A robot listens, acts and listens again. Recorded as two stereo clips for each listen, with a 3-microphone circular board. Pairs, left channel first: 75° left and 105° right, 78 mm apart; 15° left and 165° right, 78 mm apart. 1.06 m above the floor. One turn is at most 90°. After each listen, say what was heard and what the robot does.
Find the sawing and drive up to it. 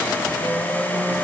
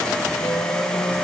Keep listening.
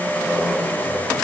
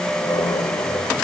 Keep listening.
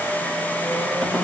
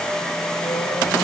I can't make out sawing, only a squeak.